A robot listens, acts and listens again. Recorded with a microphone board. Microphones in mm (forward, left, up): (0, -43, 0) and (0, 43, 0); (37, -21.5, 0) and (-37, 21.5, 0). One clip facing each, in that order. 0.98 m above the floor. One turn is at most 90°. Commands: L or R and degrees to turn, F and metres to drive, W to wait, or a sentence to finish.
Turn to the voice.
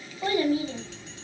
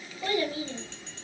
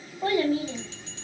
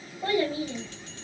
R40
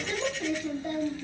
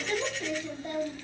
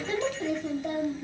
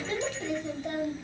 R15
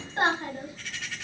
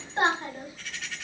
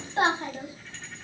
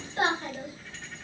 Facing the child speaking.